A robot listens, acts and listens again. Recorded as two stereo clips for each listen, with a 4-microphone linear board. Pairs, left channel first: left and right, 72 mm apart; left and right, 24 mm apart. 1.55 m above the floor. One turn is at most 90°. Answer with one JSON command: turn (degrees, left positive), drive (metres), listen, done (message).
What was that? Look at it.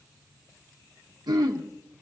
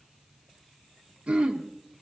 {"turn": -90}
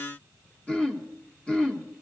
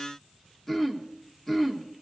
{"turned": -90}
{"turn": 15}
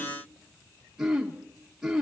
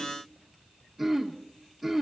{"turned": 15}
{"done": "Facing the throat clearing, 1 to 2 m away."}